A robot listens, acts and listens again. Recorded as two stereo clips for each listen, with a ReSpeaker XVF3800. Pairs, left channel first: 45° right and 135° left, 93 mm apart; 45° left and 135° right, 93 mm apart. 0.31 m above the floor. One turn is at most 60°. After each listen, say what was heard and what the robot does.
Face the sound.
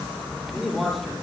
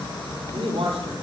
The man speaking: 140° right. Turn 60° right.
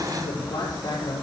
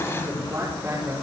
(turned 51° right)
The man speaking is now 80° right. Turn 60° right.
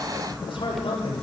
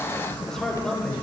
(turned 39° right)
The man speaking is now 40° right. Turn 40° right.
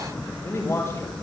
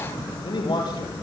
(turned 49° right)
The man speaking is now 10° left. Turn 10° left.
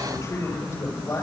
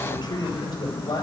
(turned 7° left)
The man speaking is now 10° left. Turn 10° left.
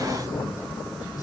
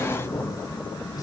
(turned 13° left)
Keep listening.
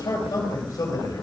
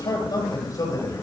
Found it: a man speaking, straight ahead, over 4 m away.